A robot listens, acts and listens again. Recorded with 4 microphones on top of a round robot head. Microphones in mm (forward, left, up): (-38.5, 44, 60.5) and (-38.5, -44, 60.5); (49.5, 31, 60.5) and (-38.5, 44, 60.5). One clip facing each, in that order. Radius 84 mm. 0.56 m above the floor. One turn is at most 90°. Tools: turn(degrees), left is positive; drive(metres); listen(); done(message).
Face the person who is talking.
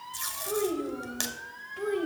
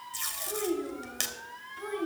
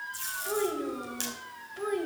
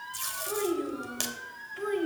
turn(degrees=70)
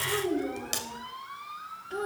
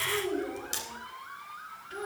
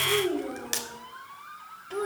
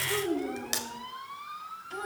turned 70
turn(degrees=30)
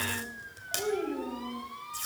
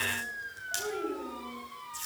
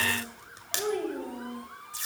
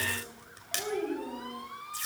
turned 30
turn(degrees=20)
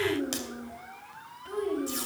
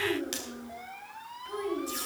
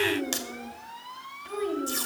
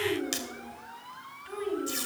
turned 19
done("Found it: a child speaking, straight ahead.")